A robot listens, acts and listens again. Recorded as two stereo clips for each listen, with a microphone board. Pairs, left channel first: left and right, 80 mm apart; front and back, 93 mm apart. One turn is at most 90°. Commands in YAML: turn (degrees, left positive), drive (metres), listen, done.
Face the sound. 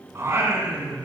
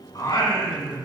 turn: -20
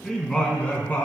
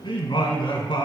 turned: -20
turn: 25
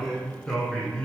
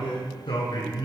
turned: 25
turn: 15
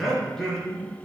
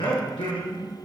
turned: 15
turn: 10
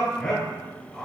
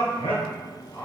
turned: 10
turn: 10
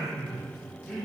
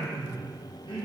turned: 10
done: "Facing the singing."